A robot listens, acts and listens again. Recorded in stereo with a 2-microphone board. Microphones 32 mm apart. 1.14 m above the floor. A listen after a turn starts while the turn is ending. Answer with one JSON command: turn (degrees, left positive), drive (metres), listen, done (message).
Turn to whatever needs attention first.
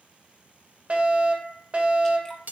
{"turn": -50}
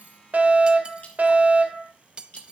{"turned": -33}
{"turn": -90}
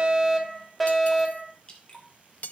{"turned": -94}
{"done": "Facing the fire alarm."}